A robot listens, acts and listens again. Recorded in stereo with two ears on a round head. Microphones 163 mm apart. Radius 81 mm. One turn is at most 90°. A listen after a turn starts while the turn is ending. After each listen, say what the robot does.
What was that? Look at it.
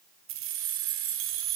Turn 90° right.
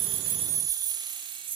Turn 30° right.
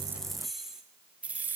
Turn 10° right.
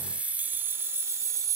Turn 20° right.
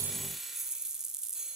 Facing the keys jangling.